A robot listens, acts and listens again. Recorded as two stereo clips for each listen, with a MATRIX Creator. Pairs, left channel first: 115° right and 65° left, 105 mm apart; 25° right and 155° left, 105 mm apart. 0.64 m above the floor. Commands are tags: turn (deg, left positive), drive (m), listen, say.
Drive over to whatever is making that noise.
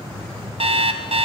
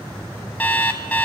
<turn deg="55"/>
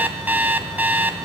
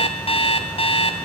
<drive m="1.0"/>
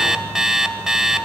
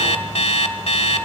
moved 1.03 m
<turn deg="-15"/>
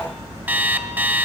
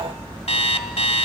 <drive m="1.0"/>
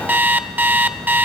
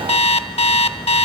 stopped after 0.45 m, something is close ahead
<say>Arrived at the alarm clock, straight ahead.</say>